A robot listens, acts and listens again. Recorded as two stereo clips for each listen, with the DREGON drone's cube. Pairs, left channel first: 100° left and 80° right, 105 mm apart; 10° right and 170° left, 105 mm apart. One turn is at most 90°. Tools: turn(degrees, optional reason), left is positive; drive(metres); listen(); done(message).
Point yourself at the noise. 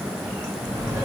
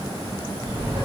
turn(degrees=-90, reason="The laughter: 140° right.")
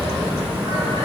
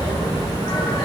turn(degrees=-50, reason="The laughter is now 50° right.")
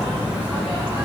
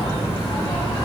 done("Found it: laughter, straight ahead, 1 to 2 m away.")